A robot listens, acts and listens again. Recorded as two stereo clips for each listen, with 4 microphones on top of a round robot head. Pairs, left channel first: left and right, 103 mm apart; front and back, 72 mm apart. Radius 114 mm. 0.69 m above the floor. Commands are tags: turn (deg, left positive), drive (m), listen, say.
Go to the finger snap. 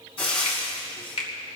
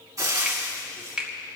<turn deg="105"/>
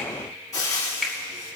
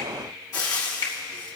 <drive m="1.0"/>
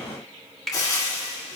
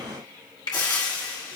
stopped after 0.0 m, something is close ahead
<say>Blocked. The finger snap is further on, straight ahead.</say>